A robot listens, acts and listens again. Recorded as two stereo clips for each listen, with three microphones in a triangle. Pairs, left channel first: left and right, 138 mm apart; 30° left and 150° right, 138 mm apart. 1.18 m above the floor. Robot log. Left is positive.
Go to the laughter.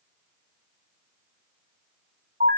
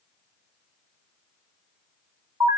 cmd idle
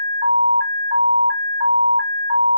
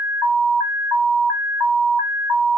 cmd idle
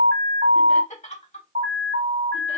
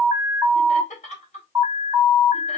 note: The laughter: 60° left.
cmd yaw +60
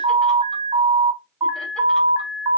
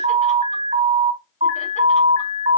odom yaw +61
cmd idle
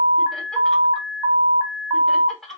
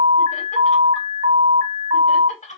cmd fwd 1.0
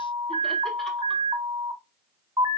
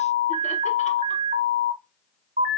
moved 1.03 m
cmd idle
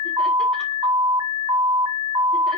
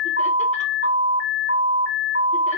cmd idle
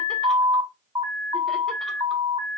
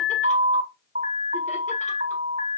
end: Facing where the laughter came from. I can't hear it now. I did not reach it.